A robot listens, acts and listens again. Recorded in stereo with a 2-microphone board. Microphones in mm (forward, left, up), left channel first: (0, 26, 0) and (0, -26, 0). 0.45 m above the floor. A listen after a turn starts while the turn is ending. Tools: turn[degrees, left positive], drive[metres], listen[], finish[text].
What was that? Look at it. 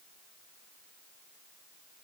Action: listen[]
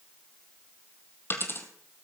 Thought: The dropped coin: about 50° left or 130° left.
Action: turn[50]
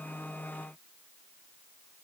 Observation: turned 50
Action: listen[]
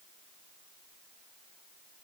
Action: finish[I heard a dropped coin, but can't make it out now. It was about straight ahead or 80° left.]